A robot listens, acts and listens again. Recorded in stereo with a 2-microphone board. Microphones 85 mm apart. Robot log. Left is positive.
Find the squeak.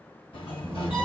note: The squeak: about 25° right or 155° right.
cmd yaw -25
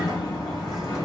cmd idle
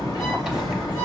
end: Facing the squeak, under 1 m away.